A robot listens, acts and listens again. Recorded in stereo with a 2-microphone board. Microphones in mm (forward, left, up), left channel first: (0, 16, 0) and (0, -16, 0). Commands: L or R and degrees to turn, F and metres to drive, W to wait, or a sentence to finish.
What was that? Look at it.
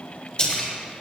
L35
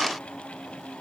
W
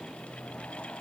I heard a splash, but can't make it out now. It was about straight ahead or 110° left.